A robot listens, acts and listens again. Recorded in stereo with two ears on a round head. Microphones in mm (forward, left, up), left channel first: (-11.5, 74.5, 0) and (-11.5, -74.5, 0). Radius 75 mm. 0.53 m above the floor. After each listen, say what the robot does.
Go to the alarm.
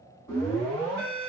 Turn 20° left.
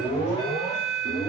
Turn 135° left.
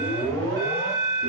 Turn 15° left.
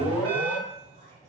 Drive 1.0 m forward.
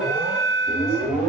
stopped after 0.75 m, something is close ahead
I am next to the alarm.